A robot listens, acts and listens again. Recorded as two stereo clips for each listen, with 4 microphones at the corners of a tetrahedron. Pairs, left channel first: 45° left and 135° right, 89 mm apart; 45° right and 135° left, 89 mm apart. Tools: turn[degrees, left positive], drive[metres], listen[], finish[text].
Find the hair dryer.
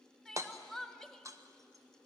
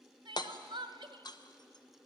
Action: listen[]
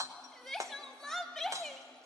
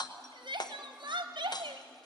Action: listen[]
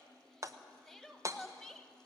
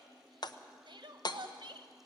Action: finish[I can't make out a hair dryer, only crying and hammering.]